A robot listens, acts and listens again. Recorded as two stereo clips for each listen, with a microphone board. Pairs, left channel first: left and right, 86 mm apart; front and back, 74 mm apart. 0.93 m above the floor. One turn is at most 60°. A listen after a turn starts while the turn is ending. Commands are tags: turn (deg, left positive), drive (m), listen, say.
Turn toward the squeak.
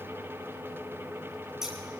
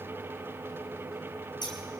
<listen/>
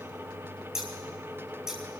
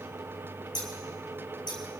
<listen/>
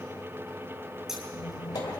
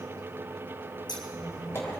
<turn deg="50"/>
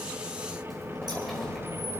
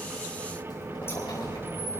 <say>Facing the squeak.</say>